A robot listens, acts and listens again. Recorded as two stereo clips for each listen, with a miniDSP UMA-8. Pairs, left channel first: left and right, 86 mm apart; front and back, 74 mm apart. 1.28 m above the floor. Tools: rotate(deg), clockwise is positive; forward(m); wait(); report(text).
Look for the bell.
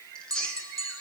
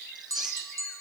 rotate(140)
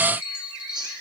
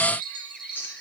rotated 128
rotate(15)
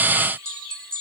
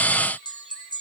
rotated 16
report("Found it: a bell, straight ahead.")